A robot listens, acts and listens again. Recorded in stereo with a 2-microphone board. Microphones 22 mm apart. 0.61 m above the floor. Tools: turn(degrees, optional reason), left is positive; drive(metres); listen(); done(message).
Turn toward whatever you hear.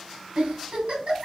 turn(degrees=-70, reason="The giggle: about 70° right or 110° right.")
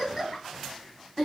turn(degrees=-10, reason="So it is at 10° right.")
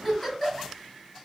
done("Found it: a giggle, straight ahead.")